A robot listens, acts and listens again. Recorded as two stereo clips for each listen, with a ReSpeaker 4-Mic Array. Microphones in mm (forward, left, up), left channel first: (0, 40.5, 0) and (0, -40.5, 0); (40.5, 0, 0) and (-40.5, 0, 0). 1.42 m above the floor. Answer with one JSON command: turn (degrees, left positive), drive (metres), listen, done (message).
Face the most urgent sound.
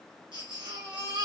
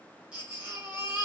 {"turn": -105}
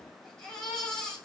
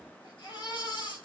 {"turn": 10}
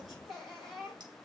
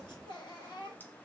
{"done": "Facing the baby crying."}